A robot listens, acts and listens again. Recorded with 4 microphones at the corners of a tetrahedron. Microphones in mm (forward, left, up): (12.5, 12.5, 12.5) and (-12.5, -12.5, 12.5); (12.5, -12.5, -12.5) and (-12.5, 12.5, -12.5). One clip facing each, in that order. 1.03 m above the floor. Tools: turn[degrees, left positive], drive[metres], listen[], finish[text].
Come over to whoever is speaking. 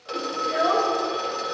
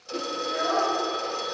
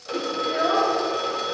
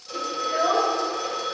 Thought: The child speaking: 75° left.
Action: turn[75]
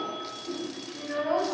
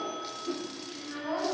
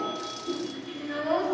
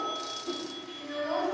Thought: The child speaking is now 20° left.
Action: turn[20]
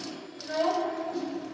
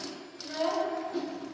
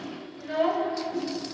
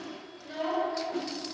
Action: drive[1.0]
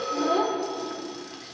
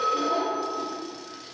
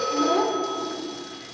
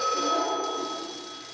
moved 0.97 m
Action: drive[1.0]
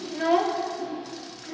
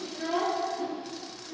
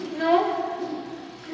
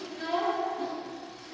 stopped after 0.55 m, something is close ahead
Action: finish[Arrived at the child speaking, straight ahead.]